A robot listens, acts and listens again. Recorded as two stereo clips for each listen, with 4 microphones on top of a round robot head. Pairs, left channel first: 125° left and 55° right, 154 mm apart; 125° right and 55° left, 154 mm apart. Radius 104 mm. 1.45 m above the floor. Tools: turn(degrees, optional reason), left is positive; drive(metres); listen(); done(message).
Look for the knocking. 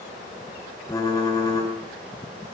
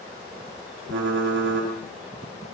listen()
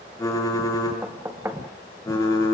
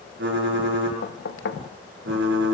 turn(degrees=-130, reason="The knocking: 130° right.")
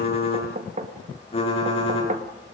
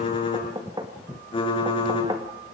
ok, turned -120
turn(degrees=-10, reason="The knocking is now 10° right.")
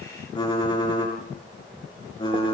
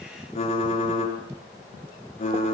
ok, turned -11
listen()
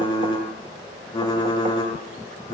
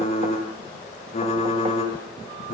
listen()
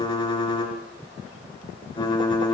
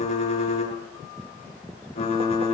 done("Facing where the knocking came from. I can't hear it now.")